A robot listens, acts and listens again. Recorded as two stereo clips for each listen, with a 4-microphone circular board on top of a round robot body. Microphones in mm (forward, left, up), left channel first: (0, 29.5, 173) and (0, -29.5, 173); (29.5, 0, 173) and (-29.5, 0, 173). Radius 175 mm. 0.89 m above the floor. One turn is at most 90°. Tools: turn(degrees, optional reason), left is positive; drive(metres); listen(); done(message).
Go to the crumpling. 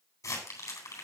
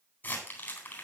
turn(degrees=60, reason="The crumpling: 60° left.")
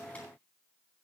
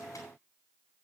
listen()
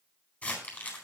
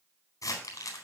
turn(degrees=20, reason="The crumpling is now 20° left.")
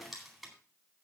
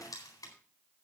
drive(metres=1.0)
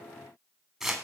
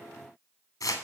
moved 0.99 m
turn(degrees=-10, reason="The crumpling is now 10° right.")
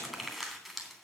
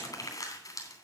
drive(metres=1.0)
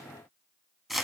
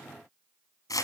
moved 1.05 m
drive(metres=1.0)
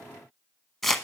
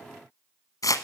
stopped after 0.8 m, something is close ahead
done("Arrived at the crumpling, straight ahead.")